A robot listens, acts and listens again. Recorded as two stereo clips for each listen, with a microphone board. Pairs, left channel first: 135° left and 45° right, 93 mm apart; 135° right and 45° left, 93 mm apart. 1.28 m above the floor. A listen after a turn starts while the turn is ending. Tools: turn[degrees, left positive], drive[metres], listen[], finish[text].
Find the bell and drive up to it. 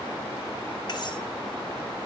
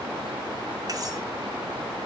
Action: listen[]
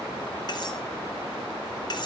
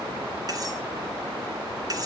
Action: listen[]
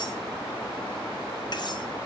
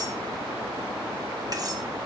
Action: finish[I can't make out a bell to turn to.]